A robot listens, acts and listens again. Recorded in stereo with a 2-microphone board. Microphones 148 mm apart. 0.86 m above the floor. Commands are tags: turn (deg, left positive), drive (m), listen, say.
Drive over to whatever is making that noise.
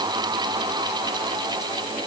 <listen/>
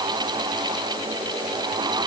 <listen/>
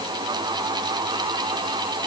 <say>I can't make out anything to turn to.</say>